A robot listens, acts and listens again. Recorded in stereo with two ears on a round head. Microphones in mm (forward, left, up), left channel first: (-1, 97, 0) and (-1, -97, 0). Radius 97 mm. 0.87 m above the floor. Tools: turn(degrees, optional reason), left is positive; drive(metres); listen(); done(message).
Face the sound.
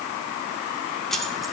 turn(degrees=30)
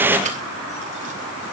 listen()
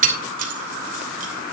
turn(degrees=-40, reason="So it is at 40° right.")
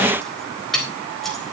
done("Facing the keys jangling, 2 to 4 m away.")